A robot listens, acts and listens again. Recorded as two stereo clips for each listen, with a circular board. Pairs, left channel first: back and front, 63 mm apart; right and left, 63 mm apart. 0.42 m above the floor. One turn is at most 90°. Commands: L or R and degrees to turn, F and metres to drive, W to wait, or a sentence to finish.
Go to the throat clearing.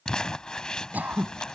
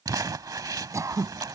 L60
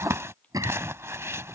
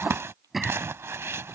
F1.0
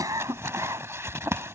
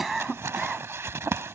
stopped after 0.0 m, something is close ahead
Blocked. The throat clearing is further on, straight ahead.